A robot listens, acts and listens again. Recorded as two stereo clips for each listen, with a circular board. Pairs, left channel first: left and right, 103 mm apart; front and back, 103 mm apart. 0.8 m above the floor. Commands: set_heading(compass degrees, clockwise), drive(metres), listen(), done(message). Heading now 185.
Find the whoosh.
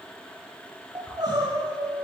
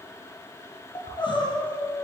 set_heading(165)
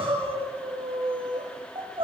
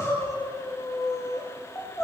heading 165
listen()
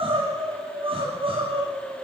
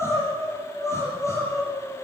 listen()
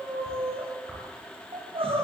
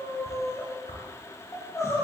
done("Facing the whoosh, over 4 m away.")